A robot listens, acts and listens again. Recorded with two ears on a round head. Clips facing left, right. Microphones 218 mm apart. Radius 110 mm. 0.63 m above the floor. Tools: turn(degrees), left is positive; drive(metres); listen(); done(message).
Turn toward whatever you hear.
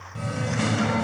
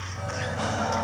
turn(degrees=35)
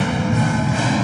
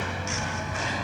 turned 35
turn(degrees=110)
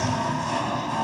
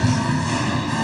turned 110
turn(degrees=-30)
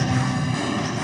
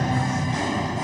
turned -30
turn(degrees=10)
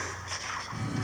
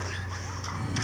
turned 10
done("Found it: singing, straight ahead.")